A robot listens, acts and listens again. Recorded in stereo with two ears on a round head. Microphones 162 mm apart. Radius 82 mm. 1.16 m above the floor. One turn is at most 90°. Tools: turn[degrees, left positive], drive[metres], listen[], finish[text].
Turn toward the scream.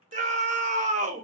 Thought: The scream: about 40° right or 140° right.
Action: turn[-40]
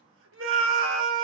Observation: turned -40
Thought: So it is at 100° right.
Action: turn[-90]
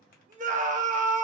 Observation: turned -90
Thought: The scream is now 40° right.
Action: turn[-40]
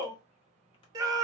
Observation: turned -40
Thought: The scream is now 20° right.
Action: turn[-20]
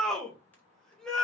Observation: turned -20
Action: finish[Found it: a scream, straight ahead.]